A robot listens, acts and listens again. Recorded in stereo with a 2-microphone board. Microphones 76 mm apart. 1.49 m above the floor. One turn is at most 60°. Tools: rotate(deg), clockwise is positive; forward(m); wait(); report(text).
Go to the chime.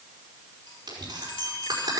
rotate(-60)
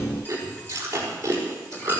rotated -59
rotate(-30)
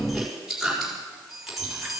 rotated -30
forward(1.0)
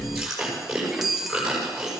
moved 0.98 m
forward(1.0)
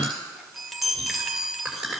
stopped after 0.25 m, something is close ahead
report("I am next to the chime.")